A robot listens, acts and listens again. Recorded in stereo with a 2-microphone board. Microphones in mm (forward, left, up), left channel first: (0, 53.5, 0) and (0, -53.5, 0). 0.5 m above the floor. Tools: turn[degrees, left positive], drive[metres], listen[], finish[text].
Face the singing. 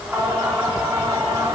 Thought: The singing: about 30° right or 150° right.
Action: turn[-30]
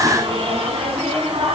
Thought: So it is at 115° right.
Action: turn[-115]
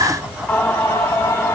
Thought: The singing is now 20° left.
Action: turn[20]
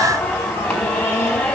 Thought: The singing is now 10° left.
Action: turn[10]
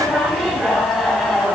Action: finish[Facing the singing.]